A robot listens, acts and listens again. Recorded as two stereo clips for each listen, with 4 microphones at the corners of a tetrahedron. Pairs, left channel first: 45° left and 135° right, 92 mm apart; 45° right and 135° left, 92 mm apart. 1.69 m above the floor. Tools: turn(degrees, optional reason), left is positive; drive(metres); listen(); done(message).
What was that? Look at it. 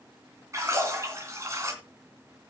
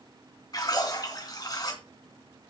turn(degrees=-80, reason="The splash: 80° right.")
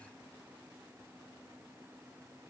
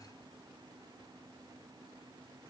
done("I heard a splash from this way, but can't make it out now.")